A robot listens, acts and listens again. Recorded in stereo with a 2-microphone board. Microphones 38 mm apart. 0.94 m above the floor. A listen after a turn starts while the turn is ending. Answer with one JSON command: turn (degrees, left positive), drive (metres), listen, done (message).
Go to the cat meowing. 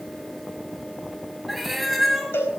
{"turn": 30}
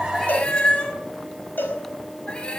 {"turn": 155}
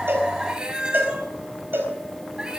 {"turn": -20}
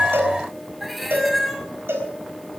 {"drive": 1.0}
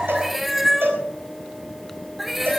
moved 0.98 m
{"drive": 1.0}
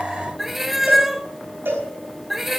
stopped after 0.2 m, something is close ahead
{"done": "I am next to the cat meowing."}